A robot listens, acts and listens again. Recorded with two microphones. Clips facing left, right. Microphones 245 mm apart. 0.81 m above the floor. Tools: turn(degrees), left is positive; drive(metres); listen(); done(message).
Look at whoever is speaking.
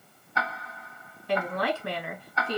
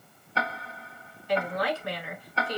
turn(degrees=60)
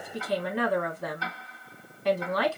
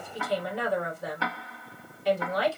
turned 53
turn(degrees=65)
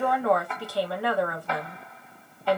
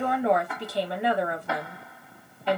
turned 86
turn(degrees=-20)
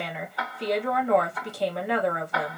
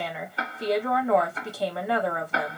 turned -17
done("Facing the woman speaking, 1 to 2 m away.")